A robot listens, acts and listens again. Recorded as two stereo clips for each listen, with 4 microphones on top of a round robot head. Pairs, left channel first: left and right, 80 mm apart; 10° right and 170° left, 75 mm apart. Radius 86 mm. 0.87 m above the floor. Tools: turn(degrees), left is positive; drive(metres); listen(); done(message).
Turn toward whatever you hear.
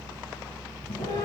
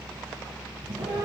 turn(degrees=125)
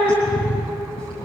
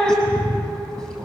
turn(degrees=65)
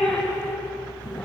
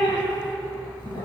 done("Found it: a cat meowing, straight ahead.")